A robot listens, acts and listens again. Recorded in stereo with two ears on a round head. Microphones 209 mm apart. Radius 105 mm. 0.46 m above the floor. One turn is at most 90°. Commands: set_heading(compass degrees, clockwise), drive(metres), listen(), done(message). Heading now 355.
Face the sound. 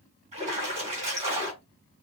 set_heading(25)
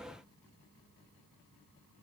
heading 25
listen()
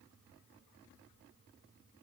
done("I heard a splash, but can't make it out now. It was about straight ahead or 120° right.")